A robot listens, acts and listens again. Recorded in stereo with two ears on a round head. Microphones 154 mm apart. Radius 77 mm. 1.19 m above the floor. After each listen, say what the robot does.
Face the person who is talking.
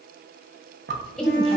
Turn 30° left.
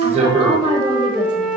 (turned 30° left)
Turn 25° right.
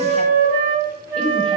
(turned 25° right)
Keep listening.
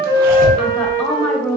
Found it: a woman speaking, straight ahead.